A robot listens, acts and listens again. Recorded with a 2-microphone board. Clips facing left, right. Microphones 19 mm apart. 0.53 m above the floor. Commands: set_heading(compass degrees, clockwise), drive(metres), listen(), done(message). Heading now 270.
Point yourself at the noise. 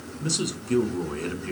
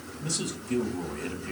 set_heading(225)
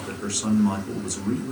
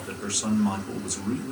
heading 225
set_heading(215)
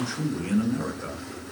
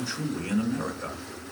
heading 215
done("Facing the man speaking.")